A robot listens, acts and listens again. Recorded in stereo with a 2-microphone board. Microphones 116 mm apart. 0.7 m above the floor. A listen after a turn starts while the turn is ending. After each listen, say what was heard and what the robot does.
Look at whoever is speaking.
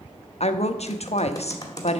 The woman speaking: about 60° left or 120° left. Turn 60° left.
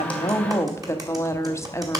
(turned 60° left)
So it is at 25° left. Turn 25° left.
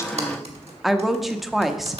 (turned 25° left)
Facing the woman speaking.